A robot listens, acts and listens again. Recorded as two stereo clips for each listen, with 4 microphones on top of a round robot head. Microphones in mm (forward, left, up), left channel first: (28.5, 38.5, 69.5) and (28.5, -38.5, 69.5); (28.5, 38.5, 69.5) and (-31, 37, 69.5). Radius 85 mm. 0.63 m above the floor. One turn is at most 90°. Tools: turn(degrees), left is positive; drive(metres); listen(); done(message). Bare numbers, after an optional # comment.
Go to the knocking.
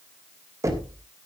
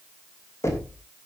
# The knocking: 40° right.
turn(-40)
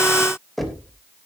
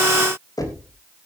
drive(1.0)
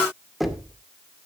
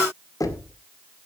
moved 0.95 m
drive(1.0)
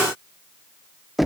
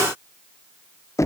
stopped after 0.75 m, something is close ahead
done("Arrived at the knocking, straight ahead.")